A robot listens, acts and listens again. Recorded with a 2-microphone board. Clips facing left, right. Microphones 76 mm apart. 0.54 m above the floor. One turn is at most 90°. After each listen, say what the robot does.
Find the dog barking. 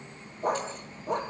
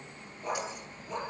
Turn 55° left.
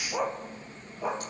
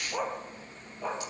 Turn 10° left.
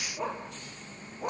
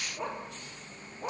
Found it: a dog barking, straight ahead.